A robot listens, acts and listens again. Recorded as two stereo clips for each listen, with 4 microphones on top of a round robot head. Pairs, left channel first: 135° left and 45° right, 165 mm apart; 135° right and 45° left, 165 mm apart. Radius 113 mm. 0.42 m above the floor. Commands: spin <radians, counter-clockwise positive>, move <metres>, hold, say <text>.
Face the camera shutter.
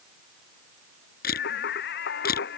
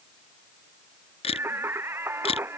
spin 2.97
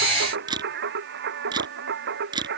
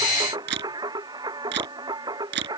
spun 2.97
spin 0.44
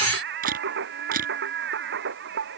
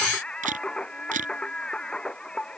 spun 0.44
say Facing the camera shutter.